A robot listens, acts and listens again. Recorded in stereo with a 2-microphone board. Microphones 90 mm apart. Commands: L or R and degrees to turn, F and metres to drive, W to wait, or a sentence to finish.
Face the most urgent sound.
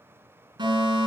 R55
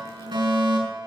R65
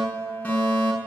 L20
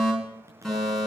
Found it: a fire alarm, straight ahead.